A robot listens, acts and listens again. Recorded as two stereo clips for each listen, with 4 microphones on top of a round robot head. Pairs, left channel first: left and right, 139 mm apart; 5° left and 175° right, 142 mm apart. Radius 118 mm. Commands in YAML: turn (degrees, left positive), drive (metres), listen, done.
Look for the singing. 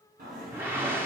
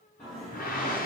turn: -80
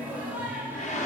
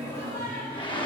turn: -15
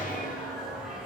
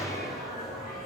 done: "Facing the singing."